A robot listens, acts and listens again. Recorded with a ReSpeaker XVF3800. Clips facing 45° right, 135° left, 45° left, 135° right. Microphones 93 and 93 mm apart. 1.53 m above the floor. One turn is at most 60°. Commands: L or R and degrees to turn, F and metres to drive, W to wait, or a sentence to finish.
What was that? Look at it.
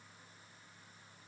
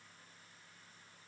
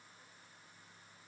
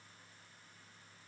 W
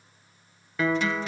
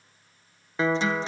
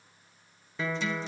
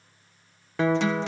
R60
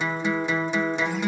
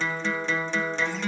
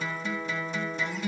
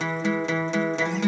R60
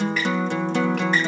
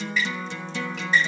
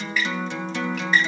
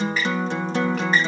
R60
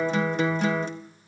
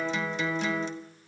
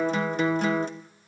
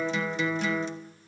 Found it: a guitar, straight ahead, 1 to 2 m away.